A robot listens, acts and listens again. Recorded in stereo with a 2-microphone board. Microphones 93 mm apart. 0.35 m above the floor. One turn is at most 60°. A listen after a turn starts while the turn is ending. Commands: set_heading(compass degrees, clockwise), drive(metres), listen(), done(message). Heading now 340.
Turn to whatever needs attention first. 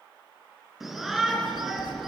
set_heading(10)
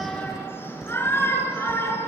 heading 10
set_heading(345)
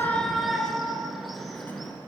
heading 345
done("Found it: a shout, straight ahead.")